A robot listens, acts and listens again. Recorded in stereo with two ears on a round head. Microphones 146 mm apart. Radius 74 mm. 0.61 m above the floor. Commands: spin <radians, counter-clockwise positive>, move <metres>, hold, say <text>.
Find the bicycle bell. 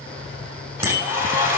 spin -0.61
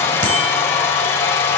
hold
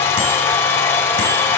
hold
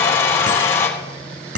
spin -1.92
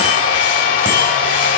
hold
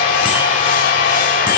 hold
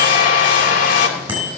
spin -0.26
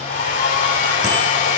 hold
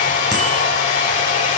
hold
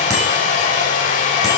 say I heard a bicycle bell from this way, but can't make it out now.